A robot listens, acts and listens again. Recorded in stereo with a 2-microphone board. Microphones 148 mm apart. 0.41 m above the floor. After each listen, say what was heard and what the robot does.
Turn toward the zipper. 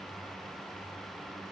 Keep listening.
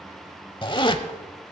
The zipper: about 35° left or 145° left. Turn 35° left.
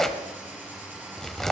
Found it: a zipper, straight ahead.